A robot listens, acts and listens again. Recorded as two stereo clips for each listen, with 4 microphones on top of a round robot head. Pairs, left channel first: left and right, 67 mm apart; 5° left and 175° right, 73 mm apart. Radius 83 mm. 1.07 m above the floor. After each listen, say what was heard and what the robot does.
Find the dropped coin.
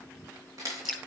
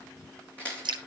The dropped coin: 65° right. Turn 65° right.
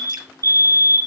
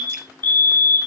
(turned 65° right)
Facing where the dropped coin came from. I can't hear it now.